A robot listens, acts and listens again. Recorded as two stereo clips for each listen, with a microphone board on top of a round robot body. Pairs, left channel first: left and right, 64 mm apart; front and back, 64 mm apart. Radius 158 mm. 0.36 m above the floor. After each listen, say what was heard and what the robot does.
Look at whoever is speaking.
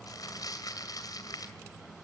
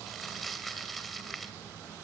Keep listening.
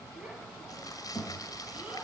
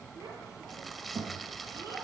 The child speaking: 160° right. Turn 160° right.
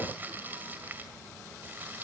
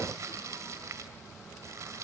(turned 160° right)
Keep listening.
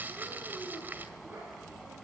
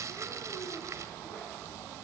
Keep listening.
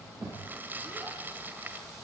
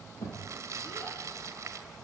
The child speaking is now 30° right. Turn 30° right.
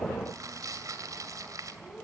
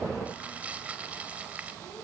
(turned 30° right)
Keep listening.
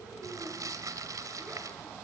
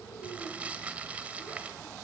Keep listening.
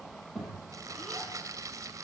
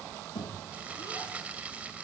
Found it: a child speaking, straight ahead.